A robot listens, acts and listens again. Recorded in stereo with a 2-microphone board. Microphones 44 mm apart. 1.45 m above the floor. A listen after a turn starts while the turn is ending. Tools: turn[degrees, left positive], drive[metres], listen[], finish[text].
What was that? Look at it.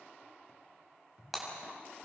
Action: turn[30]
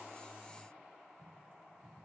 Action: listen[]
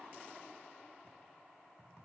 Action: finish[I heard breaking glass, but can't make it out now. It was about 30° right or 150° left.]